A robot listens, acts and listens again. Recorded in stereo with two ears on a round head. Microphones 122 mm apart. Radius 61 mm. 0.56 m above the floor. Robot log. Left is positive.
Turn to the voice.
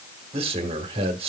note: The man speaking: about 45° right or 135° right.
cmd yaw -45
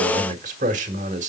note: So it is at 80° right.
cmd yaw -80
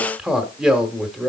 end: Facing the man speaking, 1 to 2 m away.